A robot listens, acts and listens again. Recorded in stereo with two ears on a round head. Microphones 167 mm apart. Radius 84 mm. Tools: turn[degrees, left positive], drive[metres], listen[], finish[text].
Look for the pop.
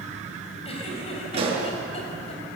Thought: The pop: about 35° right or 145° right.
Action: turn[-35]
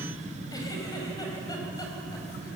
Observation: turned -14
Action: listen[]
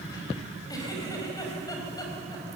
Action: finish[I heard a pop, but can't make it out now. It was about 20° right or 130° right.]